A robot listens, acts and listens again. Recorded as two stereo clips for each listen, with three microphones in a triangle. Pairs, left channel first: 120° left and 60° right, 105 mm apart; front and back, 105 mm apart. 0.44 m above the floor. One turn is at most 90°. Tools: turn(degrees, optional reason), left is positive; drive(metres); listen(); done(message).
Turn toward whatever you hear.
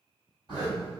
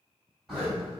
turn(degrees=-90, reason="The zipper: 95° right.")
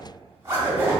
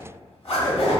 turn(degrees=-10, reason="The zipper is now 10° right.")
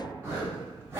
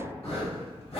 done("Facing the zipper.")